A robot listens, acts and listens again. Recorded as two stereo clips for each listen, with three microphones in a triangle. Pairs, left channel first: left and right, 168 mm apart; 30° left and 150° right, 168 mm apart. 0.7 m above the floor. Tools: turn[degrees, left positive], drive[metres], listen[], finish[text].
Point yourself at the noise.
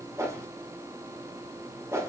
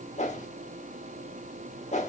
Thought: The whoosh: 20° right.
Action: turn[-20]
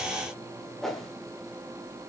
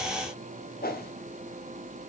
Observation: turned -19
Action: finish[Facing the whoosh.]